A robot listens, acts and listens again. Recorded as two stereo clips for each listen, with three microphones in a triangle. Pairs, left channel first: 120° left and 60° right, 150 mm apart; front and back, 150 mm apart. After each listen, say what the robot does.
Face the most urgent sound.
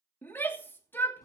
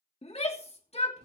Turn 45° left.
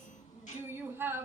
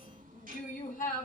Turn 15° left.
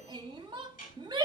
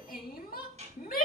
Facing the shout.